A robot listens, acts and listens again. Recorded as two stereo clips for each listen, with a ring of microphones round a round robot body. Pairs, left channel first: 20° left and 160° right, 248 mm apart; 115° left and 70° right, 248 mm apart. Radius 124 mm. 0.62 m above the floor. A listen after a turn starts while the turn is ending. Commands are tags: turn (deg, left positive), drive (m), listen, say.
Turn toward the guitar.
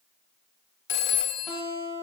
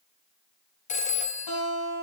<turn deg="115"/>
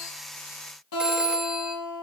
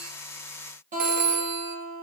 <turn deg="-10"/>
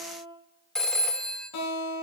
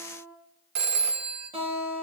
<say>Facing the guitar.</say>